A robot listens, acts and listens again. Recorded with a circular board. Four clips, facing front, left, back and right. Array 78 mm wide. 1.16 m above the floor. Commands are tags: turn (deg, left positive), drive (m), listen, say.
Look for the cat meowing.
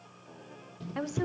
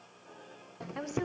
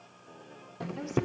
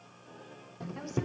<listen/>
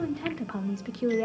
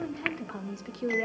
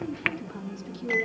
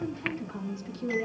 <listen/>
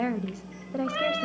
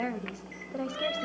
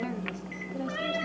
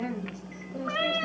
<turn deg="-45"/>
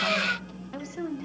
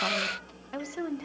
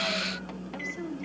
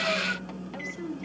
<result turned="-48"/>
<listen/>
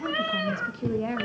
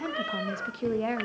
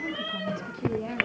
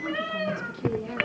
<say>Found it: a cat meowing, straight ahead, over 4 m away.</say>